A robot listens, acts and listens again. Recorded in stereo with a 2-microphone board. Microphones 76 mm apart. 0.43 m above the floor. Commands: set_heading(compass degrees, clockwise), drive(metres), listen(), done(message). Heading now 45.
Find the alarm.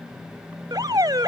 set_heading(110)
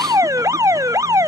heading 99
set_heading(154)
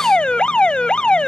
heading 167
set_heading(152)
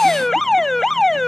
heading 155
done("Facing the alarm.")